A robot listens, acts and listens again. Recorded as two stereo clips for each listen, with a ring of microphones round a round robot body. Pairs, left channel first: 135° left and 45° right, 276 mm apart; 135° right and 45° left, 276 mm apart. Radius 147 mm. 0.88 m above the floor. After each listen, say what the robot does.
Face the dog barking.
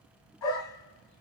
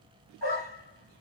Turn 160° left.
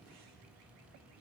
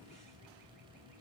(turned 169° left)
Turn 10° right.
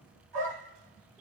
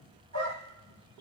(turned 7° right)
Found it: a dog barking, straight ahead.